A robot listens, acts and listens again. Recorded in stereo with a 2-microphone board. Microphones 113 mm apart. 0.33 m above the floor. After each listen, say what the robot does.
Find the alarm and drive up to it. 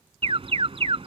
Turn 60° right.
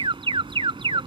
Turn 55° right.
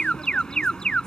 Turn 10° left.
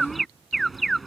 Drive 1.0 m forward.
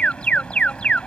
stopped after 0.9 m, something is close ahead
Turn 10° left.
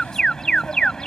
I am next to the alarm.